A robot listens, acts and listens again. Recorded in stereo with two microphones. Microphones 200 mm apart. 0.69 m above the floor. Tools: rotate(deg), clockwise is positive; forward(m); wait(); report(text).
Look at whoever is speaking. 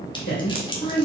rotate(-55)
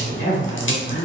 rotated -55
rotate(-65)
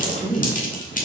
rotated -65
report("Facing the woman speaking.")